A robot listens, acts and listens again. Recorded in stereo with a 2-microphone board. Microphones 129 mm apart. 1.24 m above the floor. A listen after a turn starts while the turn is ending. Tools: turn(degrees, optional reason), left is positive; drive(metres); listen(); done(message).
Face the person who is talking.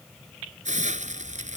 listen()
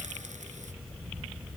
listen()
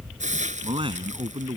turn(degrees=-40, reason="The man speaking: about 40° right or 140° right.")
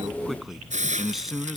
done("Facing the man speaking.")